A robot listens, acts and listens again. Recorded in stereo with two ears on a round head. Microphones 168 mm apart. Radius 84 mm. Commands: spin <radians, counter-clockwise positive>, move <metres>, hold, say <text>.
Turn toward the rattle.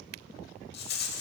spin 1.05
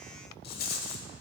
spin 0.96
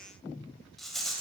say Found it: a rattle, straight ahead, under 1 m away.